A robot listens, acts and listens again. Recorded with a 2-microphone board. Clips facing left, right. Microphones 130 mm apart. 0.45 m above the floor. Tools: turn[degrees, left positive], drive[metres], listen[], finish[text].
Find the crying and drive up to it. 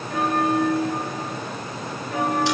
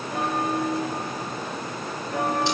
Action: listen[]
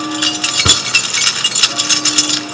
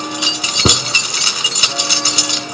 Action: listen[]
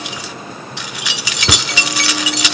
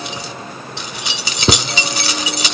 Action: finish[I can't make out crying to turn to.]